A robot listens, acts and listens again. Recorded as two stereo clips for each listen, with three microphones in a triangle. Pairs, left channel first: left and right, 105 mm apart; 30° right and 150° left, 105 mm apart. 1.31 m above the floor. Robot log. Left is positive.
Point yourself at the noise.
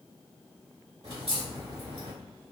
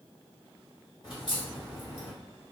note: The crack: 60° right.
cmd yaw -60
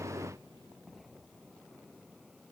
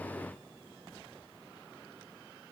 end: I heard a crack from this way, but can't make it out now.